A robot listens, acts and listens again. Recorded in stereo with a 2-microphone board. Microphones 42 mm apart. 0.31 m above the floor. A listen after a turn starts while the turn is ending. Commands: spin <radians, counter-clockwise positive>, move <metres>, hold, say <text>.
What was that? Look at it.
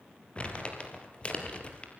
spin 0.52
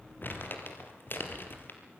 spin 2.18
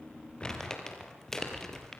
spin 0.17
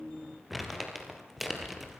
say Facing the crumpling, 2 to 4 m away.